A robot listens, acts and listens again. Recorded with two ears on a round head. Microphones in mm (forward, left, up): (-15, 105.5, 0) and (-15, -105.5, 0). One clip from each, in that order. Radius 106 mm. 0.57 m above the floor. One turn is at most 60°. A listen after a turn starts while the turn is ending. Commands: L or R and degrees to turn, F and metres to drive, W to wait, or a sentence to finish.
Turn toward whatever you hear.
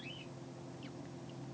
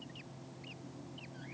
W
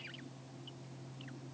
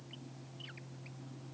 W
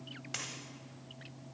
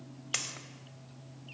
R40
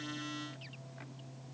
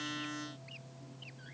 W
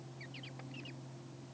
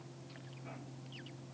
I heard a dropped coin, but can't make it out now. It was about straight ahead or 100° right.